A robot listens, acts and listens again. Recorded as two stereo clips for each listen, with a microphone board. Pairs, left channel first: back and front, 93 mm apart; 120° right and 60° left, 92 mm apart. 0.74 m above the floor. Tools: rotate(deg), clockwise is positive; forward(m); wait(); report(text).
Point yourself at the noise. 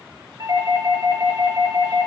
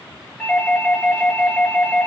rotate(40)
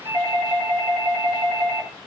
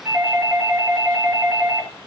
report("Found it: a doorbell, straight ahead.")